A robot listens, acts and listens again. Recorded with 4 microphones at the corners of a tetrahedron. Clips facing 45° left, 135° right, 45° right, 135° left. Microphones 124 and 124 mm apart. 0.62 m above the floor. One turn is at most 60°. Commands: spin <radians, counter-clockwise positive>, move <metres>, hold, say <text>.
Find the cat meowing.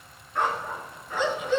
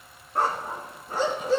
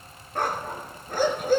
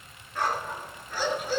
hold
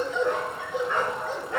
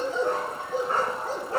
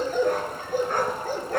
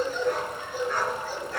hold
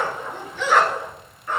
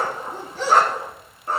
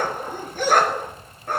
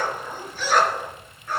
say I can't make out a cat meowing to turn to.